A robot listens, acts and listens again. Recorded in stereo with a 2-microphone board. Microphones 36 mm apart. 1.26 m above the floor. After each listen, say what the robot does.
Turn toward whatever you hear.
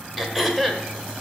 Turn 30° left.
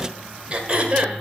Turn 30° right.
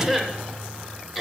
Found it: throat clearing, straight ahead, 1 to 2 m away.